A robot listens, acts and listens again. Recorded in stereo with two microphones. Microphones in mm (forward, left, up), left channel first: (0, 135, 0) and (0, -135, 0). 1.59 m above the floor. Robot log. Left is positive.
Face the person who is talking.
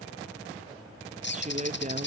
note: The woman speaking: about 30° right or 150° right.
cmd yaw -30
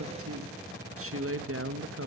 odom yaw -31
note: So it is at 120° right.
cmd yaw -120
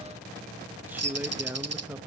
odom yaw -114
end: Facing the woman speaking.